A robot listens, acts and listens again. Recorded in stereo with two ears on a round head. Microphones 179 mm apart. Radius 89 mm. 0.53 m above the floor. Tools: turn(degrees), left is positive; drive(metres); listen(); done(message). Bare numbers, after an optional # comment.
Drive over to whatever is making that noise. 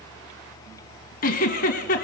# The giggle: about 45° left or 135° left.
turn(45)
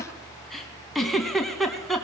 drive(1.0)
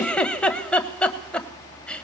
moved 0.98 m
drive(1.0)
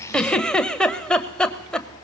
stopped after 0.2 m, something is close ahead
done("Arrived at the giggle, straight ahead.")